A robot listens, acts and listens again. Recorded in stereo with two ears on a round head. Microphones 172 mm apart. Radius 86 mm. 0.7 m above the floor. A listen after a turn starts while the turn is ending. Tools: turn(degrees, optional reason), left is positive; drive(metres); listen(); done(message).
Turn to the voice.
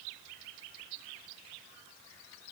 listen()
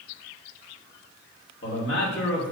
turn(degrees=65, reason="The man speaking: about 65° left or 115° left.")
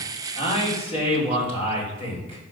turn(degrees=30, reason="So it is at 30° left.")
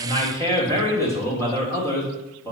turn(degrees=20, reason="The man speaking is now 20° left.")
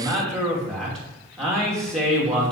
done("Facing the man speaking, 2 to 4 m away.")